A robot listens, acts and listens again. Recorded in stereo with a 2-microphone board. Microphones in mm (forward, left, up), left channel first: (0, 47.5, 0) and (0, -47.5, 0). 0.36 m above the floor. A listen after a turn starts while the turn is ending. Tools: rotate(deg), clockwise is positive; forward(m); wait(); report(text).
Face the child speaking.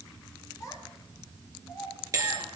rotate(-35)
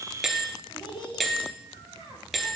rotate(-115)
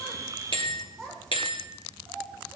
report("Found it: a child speaking, straight ahead.")